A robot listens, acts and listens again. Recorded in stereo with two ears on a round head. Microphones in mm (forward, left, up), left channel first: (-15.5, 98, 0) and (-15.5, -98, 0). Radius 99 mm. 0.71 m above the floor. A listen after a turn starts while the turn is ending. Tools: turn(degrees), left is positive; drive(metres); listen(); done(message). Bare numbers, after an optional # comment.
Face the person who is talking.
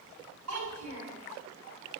turn(-90)
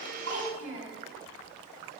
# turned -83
# So it is at 10° right.
turn(-10)
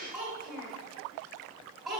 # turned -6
done("Facing the child speaking.")